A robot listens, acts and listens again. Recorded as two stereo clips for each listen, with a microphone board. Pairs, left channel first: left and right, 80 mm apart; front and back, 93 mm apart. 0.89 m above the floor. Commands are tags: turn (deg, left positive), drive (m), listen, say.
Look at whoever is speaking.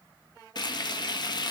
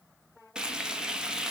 <listen/>
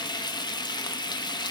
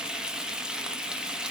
<listen/>
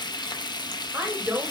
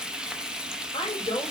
<turn deg="-25"/>
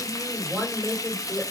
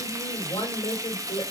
<say>Found it: a woman speaking, straight ahead.</say>